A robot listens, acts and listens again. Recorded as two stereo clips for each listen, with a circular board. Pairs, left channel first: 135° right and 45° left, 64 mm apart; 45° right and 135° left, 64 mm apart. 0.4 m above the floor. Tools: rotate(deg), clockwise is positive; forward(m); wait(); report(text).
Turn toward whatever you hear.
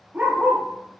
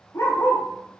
rotate(25)
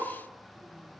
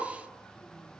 wait()
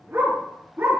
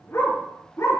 rotate(10)
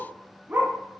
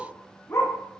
rotate(10)
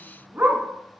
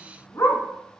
rotate(15)
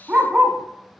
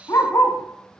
rotate(25)
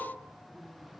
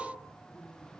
wait()
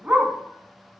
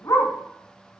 rotate(20)
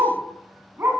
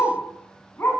report("Found it: a dog barking, straight ahead.")